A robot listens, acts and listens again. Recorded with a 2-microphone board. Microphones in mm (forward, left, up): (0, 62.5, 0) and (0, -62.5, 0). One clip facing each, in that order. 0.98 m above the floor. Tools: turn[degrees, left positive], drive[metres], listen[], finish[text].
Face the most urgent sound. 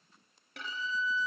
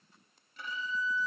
Action: listen[]
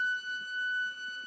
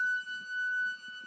Action: listen[]
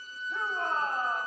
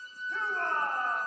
Action: turn[30]
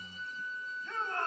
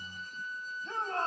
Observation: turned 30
Thought: So it is at 20° right.
Action: turn[-20]
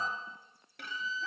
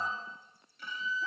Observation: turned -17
Action: listen[]
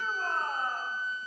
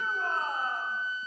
Action: finish[Found it: a shout, straight ahead.]